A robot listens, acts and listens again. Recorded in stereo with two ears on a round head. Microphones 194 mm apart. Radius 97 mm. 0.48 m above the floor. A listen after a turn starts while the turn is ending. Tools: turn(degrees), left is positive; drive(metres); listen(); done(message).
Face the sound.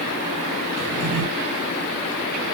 turn(degrees=-90)
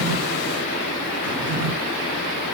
done("Found it: a drawer, straight ahead.")